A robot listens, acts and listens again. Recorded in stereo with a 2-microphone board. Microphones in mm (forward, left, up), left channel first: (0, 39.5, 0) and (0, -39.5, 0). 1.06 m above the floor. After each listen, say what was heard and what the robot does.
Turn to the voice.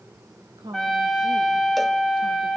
The woman speaking: about 70° right or 110° right. Turn 70° right.
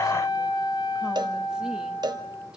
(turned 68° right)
Keep listening.
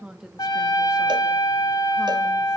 So it is at 10° right. Turn 10° right.
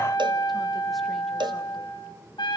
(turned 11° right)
Keep listening.
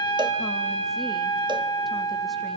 Keep listening.
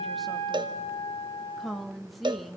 Found it: a woman speaking, straight ahead, 1 to 2 m away.